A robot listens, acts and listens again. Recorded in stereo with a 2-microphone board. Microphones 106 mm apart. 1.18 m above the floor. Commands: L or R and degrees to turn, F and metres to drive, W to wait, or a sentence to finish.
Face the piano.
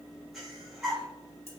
W
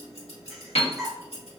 L75
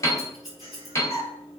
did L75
L30
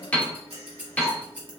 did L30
L15
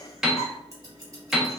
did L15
Facing the piano, under 1 m away.